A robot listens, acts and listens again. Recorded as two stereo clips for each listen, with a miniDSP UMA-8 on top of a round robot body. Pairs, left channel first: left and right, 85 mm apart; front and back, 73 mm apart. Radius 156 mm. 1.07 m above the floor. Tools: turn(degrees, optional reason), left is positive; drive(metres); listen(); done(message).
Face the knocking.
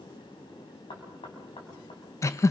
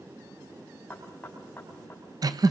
turn(degrees=70, reason="The knocking: 70° left.")
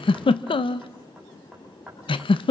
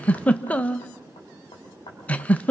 done("Facing the knocking.")